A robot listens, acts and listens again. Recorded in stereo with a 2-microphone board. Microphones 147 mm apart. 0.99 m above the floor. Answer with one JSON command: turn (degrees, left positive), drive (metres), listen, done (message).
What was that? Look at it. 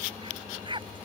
{"turn": -35}
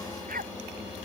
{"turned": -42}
{"turn": -105}
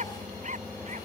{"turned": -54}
{"turn": -55}
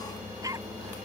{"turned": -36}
{"turn": -20}
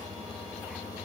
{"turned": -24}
{"listen": true}
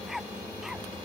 {"done": "Facing the dog barking."}